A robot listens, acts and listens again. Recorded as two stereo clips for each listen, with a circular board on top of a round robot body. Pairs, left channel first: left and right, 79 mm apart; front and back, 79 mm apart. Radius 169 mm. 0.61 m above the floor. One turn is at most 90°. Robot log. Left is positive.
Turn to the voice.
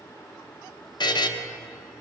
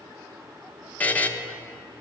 cmd idle
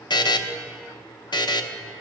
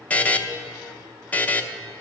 cmd idle
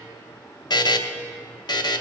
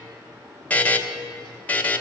end: I can't make out anyone speaking to turn to.